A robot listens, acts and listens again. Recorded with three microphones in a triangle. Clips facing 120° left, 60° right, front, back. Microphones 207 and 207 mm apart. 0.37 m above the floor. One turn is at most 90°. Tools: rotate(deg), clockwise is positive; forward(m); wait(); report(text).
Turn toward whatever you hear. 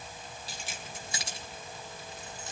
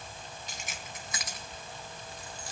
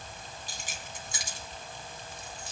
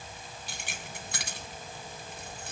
rotate(-90)
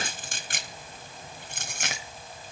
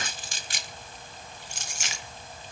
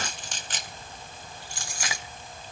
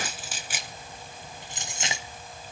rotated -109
rotate(-90)
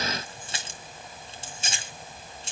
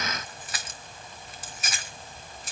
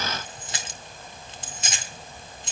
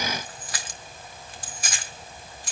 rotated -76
rotate(-65)
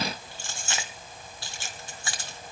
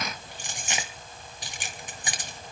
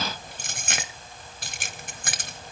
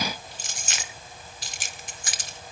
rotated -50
rotate(-10)
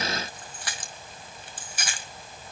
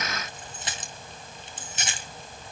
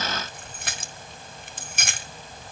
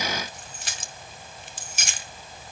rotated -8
report("Facing the keys jangling, 1 to 2 m away.")